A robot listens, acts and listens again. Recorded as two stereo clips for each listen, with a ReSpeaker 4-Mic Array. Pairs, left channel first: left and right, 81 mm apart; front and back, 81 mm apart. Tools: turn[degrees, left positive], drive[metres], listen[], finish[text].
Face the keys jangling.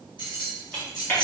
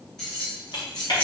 Thought: The keys jangling: 75° left.
Action: turn[75]
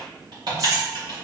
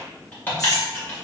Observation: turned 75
Action: listen[]
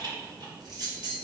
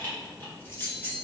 Thought: The keys jangling is now 65° right.
Action: turn[-65]
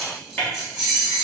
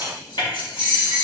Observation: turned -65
Action: finish[Facing the keys jangling.]